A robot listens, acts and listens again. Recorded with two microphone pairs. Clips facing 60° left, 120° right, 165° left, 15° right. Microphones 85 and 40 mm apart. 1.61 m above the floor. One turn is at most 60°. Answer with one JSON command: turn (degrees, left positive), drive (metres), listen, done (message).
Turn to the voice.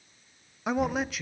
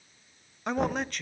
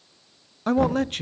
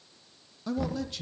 {"turn": 60}
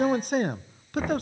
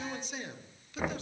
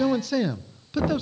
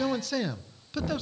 {"turn": 60}
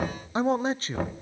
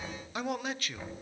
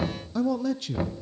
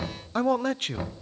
{"turn": 10}
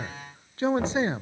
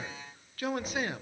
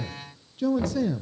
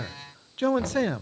{"done": "Facing the man speaking."}